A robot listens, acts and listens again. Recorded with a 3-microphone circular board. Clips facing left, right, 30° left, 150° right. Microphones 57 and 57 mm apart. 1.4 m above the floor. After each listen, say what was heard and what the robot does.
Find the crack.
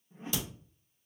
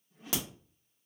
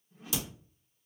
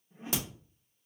The crack: 105° right. Turn 105° right.
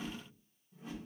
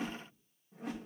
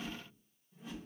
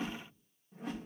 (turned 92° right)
Nothing new. It was at 15° right. Turn 15° right.
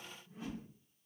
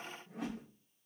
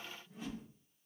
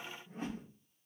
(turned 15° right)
I heard a crack from this way, but can't make it out now.